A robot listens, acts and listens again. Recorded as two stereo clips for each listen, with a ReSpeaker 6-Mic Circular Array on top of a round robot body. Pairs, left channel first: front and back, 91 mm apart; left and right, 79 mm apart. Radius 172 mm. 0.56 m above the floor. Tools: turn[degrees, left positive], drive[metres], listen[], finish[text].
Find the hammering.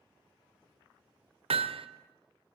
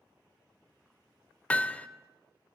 Thought: The hammering: 165° left.
Action: turn[165]
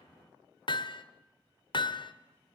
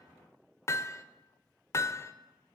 Thought: The hammering is now 35° left.
Action: turn[35]
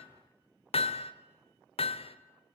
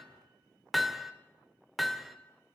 Action: finish[Found it: hammering, straight ahead.]